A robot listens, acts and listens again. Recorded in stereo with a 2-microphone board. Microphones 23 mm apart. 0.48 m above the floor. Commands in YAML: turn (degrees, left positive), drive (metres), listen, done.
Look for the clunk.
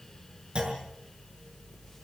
turn: -40
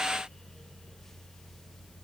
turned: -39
listen: true
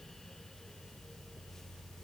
done: "I heard a clunk, but can't make it out now. It was about 5° right or 100° right."